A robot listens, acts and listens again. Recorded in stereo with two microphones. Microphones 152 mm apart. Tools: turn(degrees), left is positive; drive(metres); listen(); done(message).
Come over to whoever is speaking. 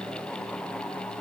listen()
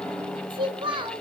turn(degrees=-35)
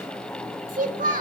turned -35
turn(degrees=-110)
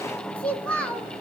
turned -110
turn(degrees=10)
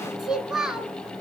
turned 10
drive(metres=1.0)
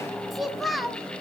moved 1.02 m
drive(metres=1.0)
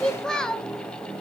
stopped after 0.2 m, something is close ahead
done("Arrived at the child speaking, straight ahead.")